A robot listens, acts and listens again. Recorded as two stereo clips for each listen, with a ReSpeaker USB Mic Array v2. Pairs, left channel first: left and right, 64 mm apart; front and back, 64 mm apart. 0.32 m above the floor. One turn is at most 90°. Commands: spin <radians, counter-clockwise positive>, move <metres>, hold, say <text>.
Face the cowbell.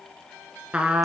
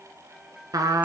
hold
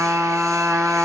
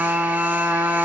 hold
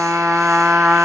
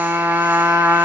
say I can't make out a cowbell, only a trumpet.